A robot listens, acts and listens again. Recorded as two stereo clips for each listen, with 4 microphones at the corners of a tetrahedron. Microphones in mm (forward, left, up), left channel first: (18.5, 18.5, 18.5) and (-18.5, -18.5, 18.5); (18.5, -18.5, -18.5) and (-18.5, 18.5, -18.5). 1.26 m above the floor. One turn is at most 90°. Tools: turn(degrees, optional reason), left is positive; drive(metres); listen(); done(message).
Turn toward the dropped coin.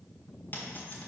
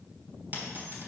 turn(degrees=90, reason="The dropped coin: 90° left.")
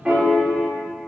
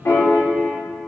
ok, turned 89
done("Facing where the dropped coin came from. I can't hear it now.")